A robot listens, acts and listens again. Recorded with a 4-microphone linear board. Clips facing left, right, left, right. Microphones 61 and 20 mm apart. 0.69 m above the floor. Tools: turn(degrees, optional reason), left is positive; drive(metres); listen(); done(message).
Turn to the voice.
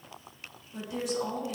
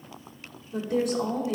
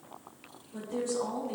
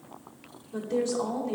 turn(degrees=-65, reason="The woman speaking: about 65° right or 115° right.")
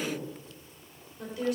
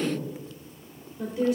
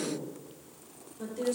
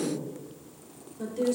turn(degrees=-25, reason="So it is at 25° right.")
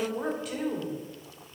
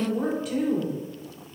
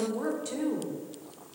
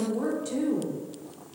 done("Found it: a woman speaking, straight ahead.")